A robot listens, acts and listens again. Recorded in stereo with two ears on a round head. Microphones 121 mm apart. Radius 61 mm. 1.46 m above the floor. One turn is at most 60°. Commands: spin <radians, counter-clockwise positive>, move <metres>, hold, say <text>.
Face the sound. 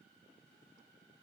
hold
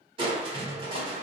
spin -0.70
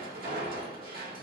spin -1.05
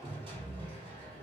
spin -0.70
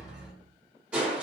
spin -0.17
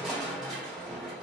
say Found it: crushing, straight ahead.